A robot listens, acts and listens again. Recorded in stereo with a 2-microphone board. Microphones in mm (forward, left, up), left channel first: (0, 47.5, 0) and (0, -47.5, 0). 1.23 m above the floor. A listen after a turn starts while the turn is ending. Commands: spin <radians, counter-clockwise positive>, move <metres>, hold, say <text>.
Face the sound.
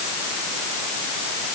hold
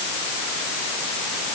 hold
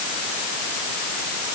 say I can't make out anything to turn to.